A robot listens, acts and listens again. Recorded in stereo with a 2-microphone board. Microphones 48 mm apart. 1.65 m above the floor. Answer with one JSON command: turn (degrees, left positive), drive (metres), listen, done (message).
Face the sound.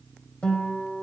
{"turn": 25}
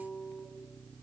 {"turn": 130}
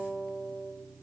{"done": "Found it: a guitar, straight ahead."}